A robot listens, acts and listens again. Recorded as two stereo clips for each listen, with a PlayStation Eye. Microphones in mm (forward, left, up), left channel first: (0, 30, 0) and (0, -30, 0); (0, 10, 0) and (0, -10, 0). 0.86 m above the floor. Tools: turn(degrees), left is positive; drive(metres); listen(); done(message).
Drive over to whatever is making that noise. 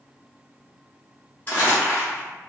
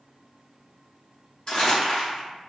turn(degrees=30)
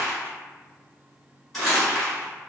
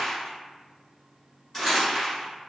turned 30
drive(metres=1.0)
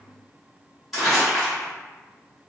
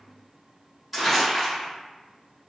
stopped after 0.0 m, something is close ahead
done("Something is in my way. I am facing the crumpling but have not reached it.")